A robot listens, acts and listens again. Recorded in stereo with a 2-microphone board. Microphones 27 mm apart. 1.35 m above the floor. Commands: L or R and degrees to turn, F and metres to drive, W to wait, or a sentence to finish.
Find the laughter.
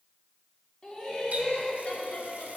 L60
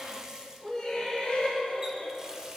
L50
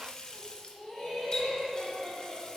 L20
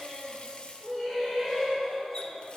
L10
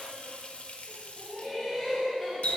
Found it: laughter, straight ahead.